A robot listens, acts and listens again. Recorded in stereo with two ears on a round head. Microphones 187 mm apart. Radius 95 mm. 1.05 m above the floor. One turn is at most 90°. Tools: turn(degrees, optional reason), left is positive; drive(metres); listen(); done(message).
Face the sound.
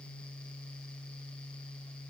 listen()
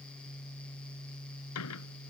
listen()
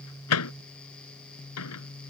turn(degrees=90)
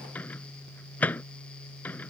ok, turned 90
done("Found it: a microwave, straight ahead.")